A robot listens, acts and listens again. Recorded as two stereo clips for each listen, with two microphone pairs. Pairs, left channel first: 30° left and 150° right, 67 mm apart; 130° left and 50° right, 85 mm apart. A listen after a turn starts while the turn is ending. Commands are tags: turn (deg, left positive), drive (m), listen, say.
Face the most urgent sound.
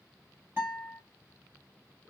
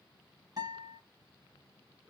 <listen/>
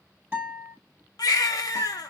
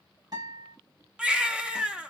<turn deg="25"/>
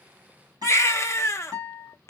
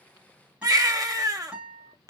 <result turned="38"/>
<turn deg="-10"/>
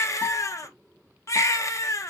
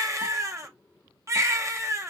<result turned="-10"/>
<say>Facing the baby crying.</say>